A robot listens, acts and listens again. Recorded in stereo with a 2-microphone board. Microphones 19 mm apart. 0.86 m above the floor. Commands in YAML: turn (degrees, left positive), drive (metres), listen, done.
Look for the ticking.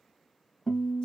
listen: true
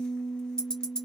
turn: 50
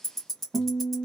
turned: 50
turn: 15
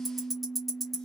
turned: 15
done: "Facing the ticking, 1 to 2 m away."